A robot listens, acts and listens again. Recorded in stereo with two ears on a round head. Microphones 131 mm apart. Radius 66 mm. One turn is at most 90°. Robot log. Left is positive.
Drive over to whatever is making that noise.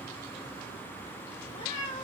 note: The cat meowing: about 50° left or 130° left.
cmd yaw +50
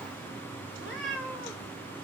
cmd fwd 1.0
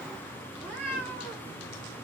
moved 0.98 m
note: The cat meowing is now 10° left.
cmd yaw +10
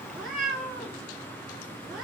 cmd fwd 1.0
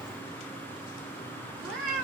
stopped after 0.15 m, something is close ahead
end: I am next to the cat meowing.